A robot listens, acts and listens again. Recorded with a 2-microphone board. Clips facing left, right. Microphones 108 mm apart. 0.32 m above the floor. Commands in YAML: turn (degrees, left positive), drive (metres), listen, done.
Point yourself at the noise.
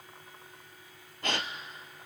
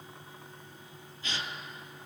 turn: 60
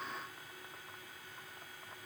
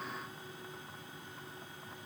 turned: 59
listen: true
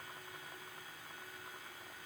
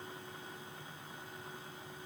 done: "I heard a gasp, but can't make it out now. It was about straight ahead or 60° left."